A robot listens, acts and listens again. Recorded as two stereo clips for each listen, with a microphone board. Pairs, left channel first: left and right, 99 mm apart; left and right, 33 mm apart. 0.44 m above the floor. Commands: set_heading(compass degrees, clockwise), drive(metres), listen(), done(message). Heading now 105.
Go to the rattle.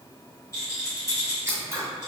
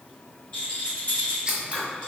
set_heading(70)
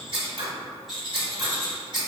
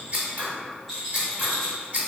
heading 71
drive(1.0)
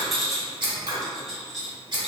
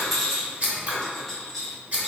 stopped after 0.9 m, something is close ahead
done("Arrived at the rattle, straight ahead.")